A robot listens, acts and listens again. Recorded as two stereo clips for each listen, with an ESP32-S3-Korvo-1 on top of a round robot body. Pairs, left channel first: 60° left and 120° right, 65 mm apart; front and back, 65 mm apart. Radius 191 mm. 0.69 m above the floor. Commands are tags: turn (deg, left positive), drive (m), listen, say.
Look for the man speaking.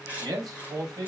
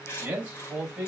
<turn deg="-100"/>
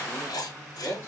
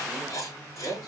<turn deg="10"/>
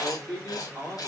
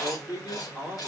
<turn deg="10"/>
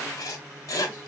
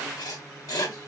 <listen/>
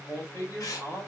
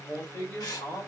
<turn deg="15"/>
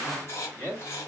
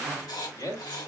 <say>Facing the man speaking, 2 to 4 m away.</say>